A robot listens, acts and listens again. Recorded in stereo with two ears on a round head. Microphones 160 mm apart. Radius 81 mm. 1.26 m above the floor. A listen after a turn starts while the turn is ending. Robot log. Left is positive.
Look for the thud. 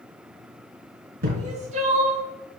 note: The thud: about 60° right or 120° right.
cmd yaw -60
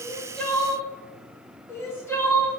cmd idle
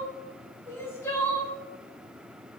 end: I heard a thud, but can't make it out now. It was about straight ahead or 60° right.